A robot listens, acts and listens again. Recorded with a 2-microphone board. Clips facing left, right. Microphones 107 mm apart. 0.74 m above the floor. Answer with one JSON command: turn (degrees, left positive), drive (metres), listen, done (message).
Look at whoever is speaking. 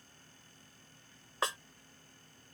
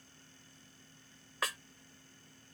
{"listen": true}
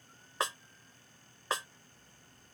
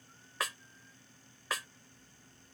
{"listen": true}
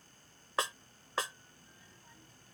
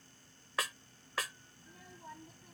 {"turn": -75}
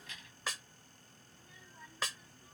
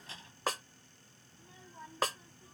{"turn": -35}
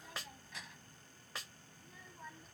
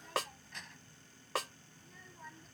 {"done": "Facing the child speaking."}